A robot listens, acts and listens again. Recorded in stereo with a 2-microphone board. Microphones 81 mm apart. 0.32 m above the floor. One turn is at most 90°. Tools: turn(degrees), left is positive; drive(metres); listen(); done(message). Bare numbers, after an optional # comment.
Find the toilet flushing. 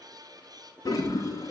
# The toilet flushing: about 40° left or 140° left.
turn(40)
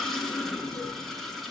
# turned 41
done("Facing the toilet flushing.")